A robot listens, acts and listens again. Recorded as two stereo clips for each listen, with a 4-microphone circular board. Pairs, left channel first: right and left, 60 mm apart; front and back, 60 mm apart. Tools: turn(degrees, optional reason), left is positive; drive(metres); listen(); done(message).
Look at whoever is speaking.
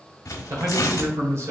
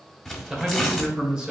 turn(degrees=105, reason="The man speaking: 105° left.")
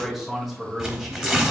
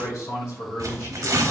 done("Facing the man speaking.")